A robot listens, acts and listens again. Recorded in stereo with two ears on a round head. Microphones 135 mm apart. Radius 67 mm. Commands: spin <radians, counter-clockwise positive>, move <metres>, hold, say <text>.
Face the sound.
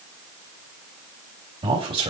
spin -0.61
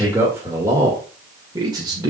spin -0.52
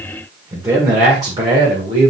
spin -0.61
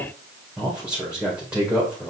spin -0.17
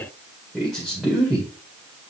say Found it: a man speaking, straight ahead, 1 to 2 m away.